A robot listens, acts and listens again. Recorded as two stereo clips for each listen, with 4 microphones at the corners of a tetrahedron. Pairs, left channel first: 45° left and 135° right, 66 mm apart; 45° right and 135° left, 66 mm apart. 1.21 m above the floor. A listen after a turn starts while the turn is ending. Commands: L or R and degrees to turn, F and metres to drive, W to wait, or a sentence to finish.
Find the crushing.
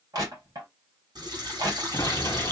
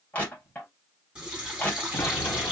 R115
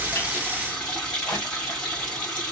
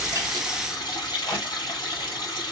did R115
Found it: crushing, straight ahead, 2 to 4 m away.